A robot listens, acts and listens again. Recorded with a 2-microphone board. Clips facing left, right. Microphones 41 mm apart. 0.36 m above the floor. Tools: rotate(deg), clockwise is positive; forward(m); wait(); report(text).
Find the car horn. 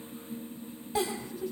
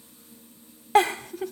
wait()
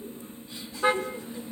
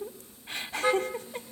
rotate(-20)
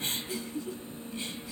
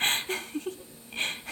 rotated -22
wait()
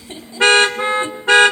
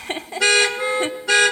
rotate(-140)
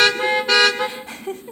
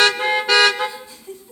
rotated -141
report("Found it: a car horn, straight ahead, 2 to 4 m away.")